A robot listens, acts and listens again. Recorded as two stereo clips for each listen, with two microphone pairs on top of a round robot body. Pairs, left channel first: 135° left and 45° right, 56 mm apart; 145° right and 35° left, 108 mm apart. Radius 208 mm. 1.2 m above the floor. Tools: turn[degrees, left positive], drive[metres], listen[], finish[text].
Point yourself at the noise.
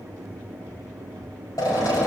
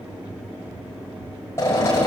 Thought: The drill: 150° left.
Action: turn[150]
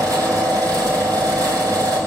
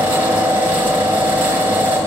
Thought: The drill is now 40° right.
Action: turn[-40]
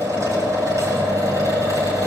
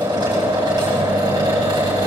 Thought: The drill is now 15° right.
Action: turn[-15]
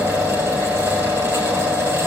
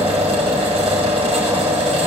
Action: finish[Facing the drill, over 4 m away.]